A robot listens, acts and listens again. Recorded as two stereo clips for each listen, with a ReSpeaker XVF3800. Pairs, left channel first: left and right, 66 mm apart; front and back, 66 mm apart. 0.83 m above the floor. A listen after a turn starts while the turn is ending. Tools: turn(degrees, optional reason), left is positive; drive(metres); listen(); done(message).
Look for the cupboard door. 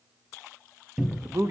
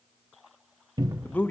turn(degrees=-175, reason="The cupboard door: 175° right.")
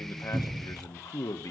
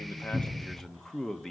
turn(degrees=-35, reason="The cupboard door is now 35° right.")
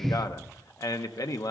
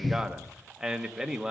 listen()
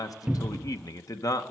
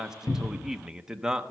turn(degrees=-15, reason="The cupboard door is now 15° right.")
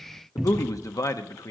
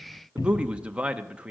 done("Facing the cupboard door, under 1 m away.")